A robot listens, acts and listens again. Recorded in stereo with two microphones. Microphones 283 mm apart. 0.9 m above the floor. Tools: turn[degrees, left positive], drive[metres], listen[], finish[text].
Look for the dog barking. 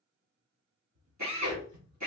Thought: The dog barking: about 70° right or 110° right.
Action: turn[-70]
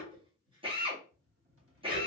Thought: So it is at 15° right.
Action: turn[-15]
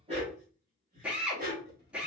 Thought: The dog barking is now 35° right.
Action: turn[-35]
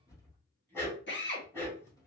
Action: finish[Facing the dog barking.]